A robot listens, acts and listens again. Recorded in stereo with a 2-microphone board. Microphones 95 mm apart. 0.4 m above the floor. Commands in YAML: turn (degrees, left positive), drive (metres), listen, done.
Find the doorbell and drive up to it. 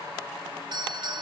turn: -55
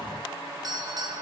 turn: -60
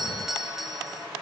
drive: 1.0
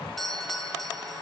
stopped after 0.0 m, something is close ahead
done: "Blocked. The doorbell is further on, straight ahead."